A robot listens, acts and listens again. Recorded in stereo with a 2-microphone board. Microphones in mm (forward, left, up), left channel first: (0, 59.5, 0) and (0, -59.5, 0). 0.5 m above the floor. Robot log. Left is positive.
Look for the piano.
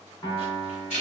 note: The piano: about 35° left or 145° left.
cmd yaw +35
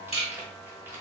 cmd idle
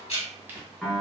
end: Found it: a piano, straight ahead, 1 to 2 m away.